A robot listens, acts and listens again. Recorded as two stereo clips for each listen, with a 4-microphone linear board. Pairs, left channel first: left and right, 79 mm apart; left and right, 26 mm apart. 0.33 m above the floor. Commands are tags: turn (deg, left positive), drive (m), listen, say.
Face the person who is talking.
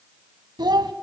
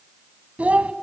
<turn deg="-65"/>
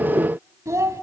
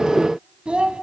<turn deg="-45"/>
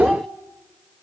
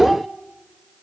<listen/>
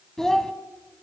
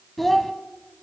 <say>Facing the child speaking.</say>